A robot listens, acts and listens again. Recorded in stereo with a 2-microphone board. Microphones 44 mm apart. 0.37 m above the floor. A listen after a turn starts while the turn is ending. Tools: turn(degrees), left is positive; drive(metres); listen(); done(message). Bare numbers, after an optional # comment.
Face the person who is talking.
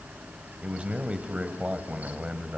# The man speaking: about 25° right or 155° right.
turn(-25)
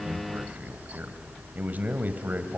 # So it is at 125° right.
turn(-125)
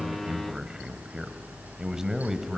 # The man speaking is now 15° right.
turn(-15)
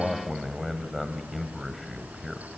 done("Found it: a man speaking, straight ahead.")